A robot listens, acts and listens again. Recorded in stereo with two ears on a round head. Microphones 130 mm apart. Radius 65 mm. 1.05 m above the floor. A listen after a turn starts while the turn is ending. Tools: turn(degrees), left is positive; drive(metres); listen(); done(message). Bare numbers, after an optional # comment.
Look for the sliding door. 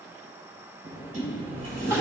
# The sliding door: about 55° right or 125° right.
turn(-55)
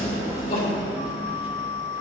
# So it is at 10° right.
turn(-10)
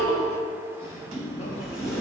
done("Facing the sliding door.")